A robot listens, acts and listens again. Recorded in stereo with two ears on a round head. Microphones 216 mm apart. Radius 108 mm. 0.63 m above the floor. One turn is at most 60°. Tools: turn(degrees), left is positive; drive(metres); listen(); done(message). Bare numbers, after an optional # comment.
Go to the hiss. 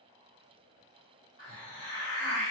# The hiss: about 55° right or 125° right.
turn(-55)
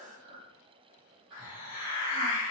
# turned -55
# So it is at 45° right.
turn(-45)
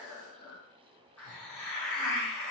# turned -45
# The hiss is now 10° left.
turn(10)
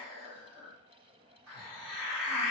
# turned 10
drive(1.0)
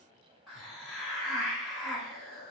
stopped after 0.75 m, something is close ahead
done("I am next to the hiss.")